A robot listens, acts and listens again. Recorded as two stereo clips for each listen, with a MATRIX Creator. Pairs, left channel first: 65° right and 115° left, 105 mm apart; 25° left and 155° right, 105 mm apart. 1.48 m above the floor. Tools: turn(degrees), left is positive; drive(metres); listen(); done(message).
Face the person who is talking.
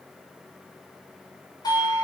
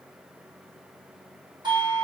listen()
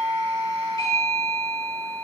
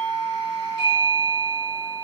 listen()
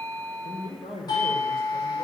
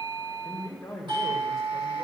turn(degrees=-65)
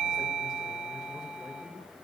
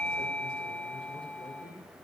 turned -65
listen()
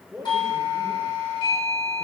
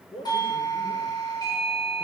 turn(degrees=30)
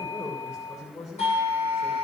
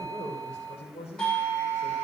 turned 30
done("Found it: a man speaking, straight ahead.")